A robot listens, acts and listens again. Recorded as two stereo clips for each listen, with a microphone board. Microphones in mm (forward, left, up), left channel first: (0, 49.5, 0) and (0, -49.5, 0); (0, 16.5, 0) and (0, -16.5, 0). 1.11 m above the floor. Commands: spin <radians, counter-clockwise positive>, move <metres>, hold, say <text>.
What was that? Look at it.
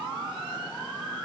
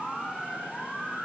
hold
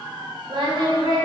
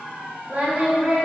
spin -0.87
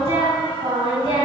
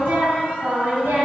spin -1.40
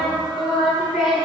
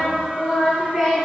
spin -0.17
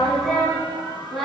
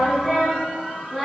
say Found it: singing, straight ahead, over 4 m away.